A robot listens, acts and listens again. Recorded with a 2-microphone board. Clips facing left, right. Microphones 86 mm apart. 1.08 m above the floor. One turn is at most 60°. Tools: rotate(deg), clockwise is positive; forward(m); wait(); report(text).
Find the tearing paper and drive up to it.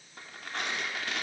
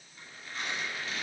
rotate(-60)
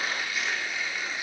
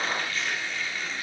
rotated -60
rotate(-10)
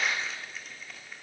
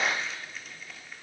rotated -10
forward(1.0)
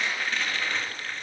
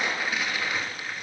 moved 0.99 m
rotate(10)
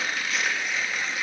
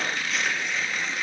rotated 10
forward(1.0)
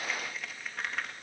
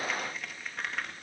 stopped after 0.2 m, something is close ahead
report("Arrived at the tearing paper, straight ahead.")